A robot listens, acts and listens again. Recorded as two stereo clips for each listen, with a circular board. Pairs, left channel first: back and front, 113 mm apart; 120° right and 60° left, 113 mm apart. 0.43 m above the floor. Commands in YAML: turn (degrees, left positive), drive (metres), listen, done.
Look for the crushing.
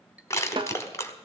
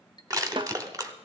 turn: 115
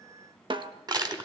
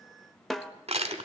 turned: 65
turn: 50
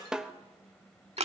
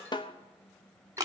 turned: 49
done: "Found it: crushing, straight ahead, 1 to 2 m away."